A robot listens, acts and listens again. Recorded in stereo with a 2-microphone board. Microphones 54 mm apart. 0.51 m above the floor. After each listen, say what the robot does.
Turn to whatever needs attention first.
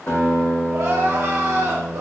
Turn 75° right.
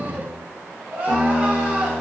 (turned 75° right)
Turn 30° right.
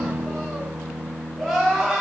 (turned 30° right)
Facing the crying, 1 to 2 m away.